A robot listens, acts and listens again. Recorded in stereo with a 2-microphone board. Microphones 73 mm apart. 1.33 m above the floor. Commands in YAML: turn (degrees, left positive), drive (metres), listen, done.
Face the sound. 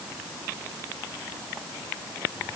listen: true
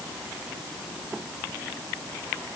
listen: true
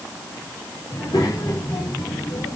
turn: 50
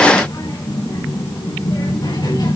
turn: 80
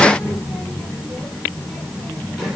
done: "Facing the child speaking."